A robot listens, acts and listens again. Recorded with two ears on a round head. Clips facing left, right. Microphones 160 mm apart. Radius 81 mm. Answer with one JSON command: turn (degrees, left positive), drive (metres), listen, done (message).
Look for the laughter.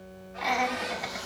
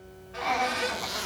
{"turn": 30}
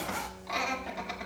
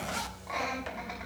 {"turn": 135}
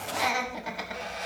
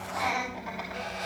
{"turn": 55}
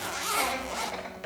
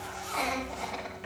{"done": "Found it: laughter, straight ahead."}